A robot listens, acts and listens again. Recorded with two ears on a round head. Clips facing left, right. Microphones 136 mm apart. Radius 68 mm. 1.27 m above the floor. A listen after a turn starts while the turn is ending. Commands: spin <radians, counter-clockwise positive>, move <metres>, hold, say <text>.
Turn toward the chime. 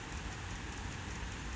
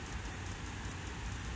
hold
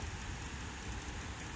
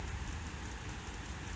hold
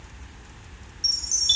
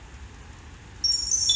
spin -0.52
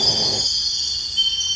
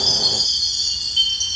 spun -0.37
spin -2.62
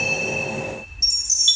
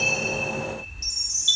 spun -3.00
spin 0.44
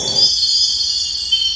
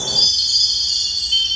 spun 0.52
say Facing the chime, 1 to 2 m away.